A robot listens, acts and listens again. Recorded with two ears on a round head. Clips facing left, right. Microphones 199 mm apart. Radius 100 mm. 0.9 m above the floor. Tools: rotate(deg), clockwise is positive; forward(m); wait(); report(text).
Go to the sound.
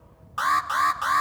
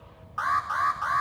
rotate(-50)
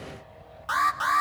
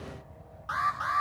rotate(-75)
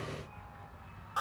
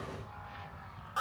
forward(1.0)
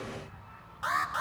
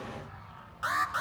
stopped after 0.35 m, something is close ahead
rotate(10)
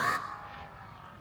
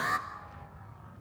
report("Something is in my way. I am facing the alarm but have not reached it.")